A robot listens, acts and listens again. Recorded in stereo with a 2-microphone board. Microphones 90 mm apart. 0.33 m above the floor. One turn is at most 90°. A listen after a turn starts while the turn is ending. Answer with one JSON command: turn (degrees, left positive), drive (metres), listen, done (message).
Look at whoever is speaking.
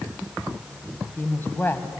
{"turn": 25}
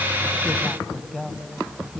{"done": "Found it: a woman speaking, straight ahead."}